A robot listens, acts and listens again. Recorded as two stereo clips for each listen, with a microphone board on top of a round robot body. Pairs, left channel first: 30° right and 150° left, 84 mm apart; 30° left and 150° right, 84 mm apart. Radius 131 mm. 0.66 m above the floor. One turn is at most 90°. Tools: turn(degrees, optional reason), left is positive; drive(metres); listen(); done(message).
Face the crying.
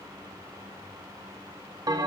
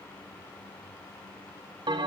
listen()
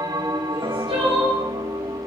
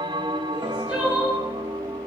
turn(degrees=90, reason="The crying: 135° left.")
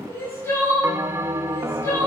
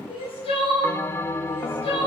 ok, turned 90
turn(degrees=35, reason="The crying is now 35° left.")
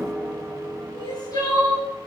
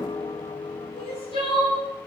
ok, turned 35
turn(degrees=15, reason="The crying is now 15° left.")
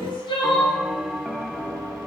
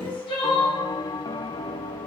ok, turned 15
done("Facing the crying.")